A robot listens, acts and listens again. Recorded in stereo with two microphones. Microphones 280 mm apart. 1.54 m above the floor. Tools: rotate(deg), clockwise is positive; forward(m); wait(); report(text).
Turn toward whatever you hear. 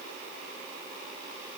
wait()
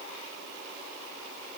wait()
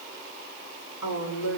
rotate(-65)
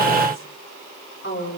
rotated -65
rotate(-45)
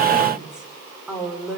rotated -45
report("Found it: a woman speaking, straight ahead, over 4 m away.")